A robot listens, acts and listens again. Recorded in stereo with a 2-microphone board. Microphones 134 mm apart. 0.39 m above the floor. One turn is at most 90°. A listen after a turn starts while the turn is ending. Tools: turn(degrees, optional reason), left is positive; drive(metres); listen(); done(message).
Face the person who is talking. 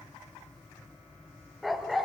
listen()
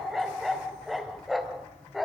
listen()
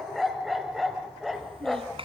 turn(degrees=-45, reason="The child speaking: about 45° right or 135° right.")
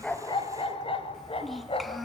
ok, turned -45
done("Found it: a child speaking, straight ahead.")